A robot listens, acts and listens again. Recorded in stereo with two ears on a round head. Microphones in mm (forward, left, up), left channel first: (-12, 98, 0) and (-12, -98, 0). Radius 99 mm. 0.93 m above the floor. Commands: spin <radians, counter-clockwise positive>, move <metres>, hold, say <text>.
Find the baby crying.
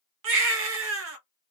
spin -1.05
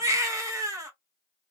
spin -0.26
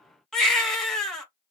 say Facing the baby crying.